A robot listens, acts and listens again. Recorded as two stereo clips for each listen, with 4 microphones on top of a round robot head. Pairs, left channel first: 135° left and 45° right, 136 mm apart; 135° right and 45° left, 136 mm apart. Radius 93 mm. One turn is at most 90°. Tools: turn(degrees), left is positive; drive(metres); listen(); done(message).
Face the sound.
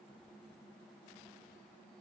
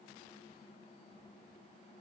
listen()
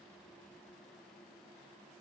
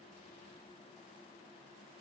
listen()
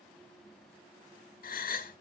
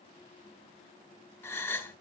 turn(degrees=90)
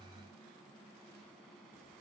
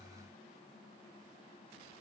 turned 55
turn(degrees=90)
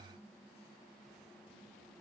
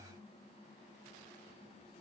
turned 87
turn(degrees=10)
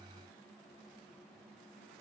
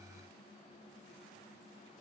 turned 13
done("Facing where the gasp came from. I can't hear it now.")